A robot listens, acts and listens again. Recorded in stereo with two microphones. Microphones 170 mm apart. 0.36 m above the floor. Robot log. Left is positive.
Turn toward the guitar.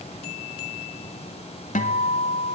note: The guitar: about 50° left or 130° left.
cmd yaw +50
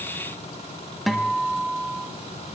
end: Facing the guitar, 1 to 2 m away.